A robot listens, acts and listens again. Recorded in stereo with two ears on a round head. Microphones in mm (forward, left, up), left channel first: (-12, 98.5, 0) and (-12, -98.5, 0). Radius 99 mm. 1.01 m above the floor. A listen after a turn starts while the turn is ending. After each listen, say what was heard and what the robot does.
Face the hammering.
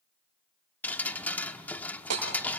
Turn 90° right.
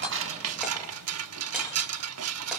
Keep listening.
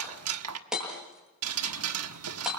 Facing the hammering.